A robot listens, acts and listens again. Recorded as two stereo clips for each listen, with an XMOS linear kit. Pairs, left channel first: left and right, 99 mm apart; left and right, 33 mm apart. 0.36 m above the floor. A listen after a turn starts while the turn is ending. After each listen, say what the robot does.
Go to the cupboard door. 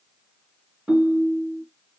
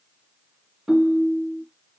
Keep listening.
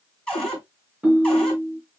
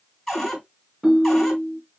Turn 30° left.
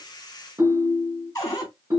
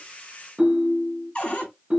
Turn 140° left.
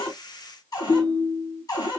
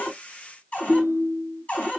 Turn 45° left.
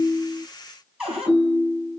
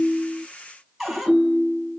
Turn 10° right.
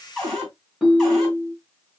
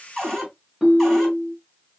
Drive 1.0 m forward.
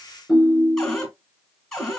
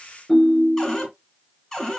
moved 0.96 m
Drive 1.0 m forward.
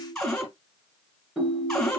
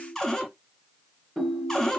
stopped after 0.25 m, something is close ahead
I am next to the cupboard door.